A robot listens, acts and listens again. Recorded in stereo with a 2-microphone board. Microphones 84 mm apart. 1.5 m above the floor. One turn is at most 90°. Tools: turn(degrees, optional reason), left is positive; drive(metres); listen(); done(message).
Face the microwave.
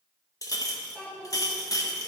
listen()
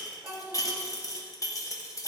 listen()
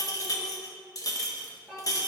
done("I can't make out a microwave, only a child speaking and a clink.")